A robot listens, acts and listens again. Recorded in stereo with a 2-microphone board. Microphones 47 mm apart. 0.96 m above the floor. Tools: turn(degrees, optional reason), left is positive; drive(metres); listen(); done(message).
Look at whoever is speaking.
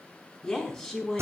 turn(degrees=15, reason="The woman speaking: about 15° left or 165° left.")
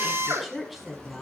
done("Found it: a woman speaking, straight ahead, over 4 m away.")